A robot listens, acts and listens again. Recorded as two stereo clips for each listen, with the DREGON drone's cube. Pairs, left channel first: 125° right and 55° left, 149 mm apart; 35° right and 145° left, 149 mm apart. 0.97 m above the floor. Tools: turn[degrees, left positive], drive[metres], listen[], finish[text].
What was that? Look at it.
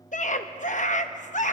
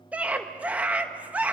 Thought: The scream: 135° right.
Action: turn[-135]
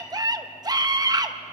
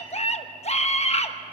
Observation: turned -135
Action: finish[Facing the scream, 1 to 2 m away.]